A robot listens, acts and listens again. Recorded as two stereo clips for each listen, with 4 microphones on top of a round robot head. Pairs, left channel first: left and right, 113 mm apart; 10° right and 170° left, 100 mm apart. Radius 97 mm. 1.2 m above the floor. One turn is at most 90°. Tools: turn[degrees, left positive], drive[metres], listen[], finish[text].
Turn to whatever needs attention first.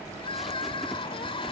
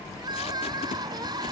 Thought: The crying: 130° left.
Action: turn[90]
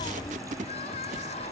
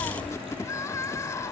Thought: The crying is now 50° left.
Action: turn[50]
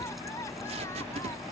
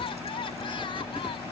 Thought: The crying is now 20° left.
Action: turn[20]
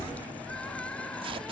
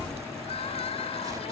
Action: finish[Facing the crying.]